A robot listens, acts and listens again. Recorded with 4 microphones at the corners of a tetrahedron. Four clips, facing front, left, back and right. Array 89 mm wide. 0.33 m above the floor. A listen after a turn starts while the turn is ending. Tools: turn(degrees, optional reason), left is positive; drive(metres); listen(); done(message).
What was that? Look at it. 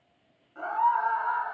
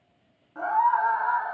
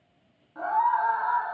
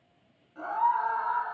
turn(degrees=110, reason="The scream: 110° left.")
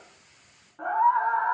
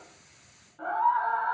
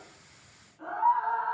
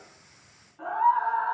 turn(degrees=10, reason="The scream is now 10° left.")
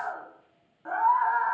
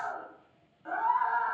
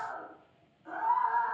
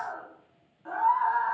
done("Found it: a scream, straight ahead.")